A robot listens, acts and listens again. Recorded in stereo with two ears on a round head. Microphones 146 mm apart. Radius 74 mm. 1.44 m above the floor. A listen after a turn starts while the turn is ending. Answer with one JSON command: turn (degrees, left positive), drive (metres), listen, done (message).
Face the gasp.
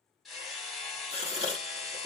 {"turn": -35}
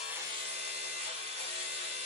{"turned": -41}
{"listen": true}
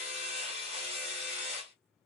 {"done": "I heard a gasp, but can't make it out now. It was about 5° left or 105° right."}